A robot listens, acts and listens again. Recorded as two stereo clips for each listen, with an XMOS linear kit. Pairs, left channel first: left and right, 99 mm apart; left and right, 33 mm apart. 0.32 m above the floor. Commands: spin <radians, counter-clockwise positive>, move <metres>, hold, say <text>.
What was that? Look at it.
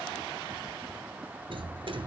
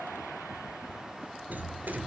spin -1.22
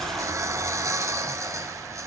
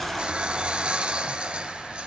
spin -0.61
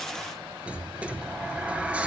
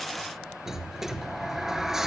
spin -0.26
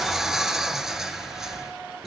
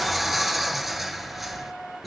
say Facing the sliding door.